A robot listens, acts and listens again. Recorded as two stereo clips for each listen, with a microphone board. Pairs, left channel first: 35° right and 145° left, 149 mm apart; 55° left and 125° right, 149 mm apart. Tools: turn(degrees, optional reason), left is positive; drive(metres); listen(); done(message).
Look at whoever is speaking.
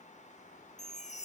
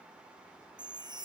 listen()
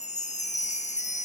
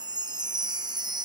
listen()
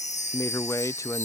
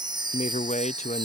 turn(degrees=30, reason="The man speaking: 30° left.")
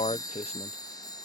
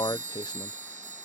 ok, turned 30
done("Found it: a man speaking, straight ahead.")